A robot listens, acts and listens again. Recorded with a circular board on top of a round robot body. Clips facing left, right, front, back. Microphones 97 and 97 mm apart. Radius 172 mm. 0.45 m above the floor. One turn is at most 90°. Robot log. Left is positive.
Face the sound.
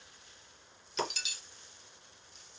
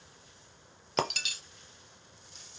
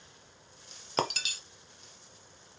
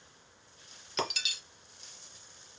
note: The breaking glass: 50° right.
cmd yaw -50
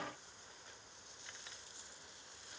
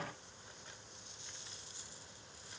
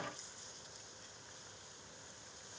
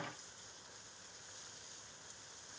end: Facing where the breaking glass came from. I can't hear it now.